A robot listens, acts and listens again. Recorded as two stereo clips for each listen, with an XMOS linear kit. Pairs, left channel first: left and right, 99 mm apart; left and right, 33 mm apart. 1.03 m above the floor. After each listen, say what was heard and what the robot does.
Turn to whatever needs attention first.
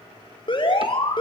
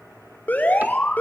The alarm: about 55° left or 125° left. Turn 55° left.
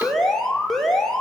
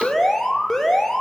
Found it: an alarm, straight ahead, over 4 m away.